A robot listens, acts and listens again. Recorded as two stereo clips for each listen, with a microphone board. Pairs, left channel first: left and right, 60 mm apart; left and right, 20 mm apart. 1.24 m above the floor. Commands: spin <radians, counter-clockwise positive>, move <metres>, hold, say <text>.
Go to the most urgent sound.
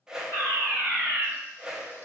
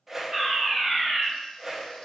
spin -0.87
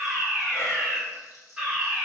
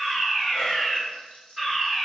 spin -0.17
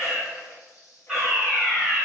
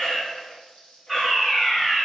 move 1.0
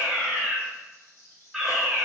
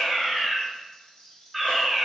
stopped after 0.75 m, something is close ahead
say I am next to the fire alarm.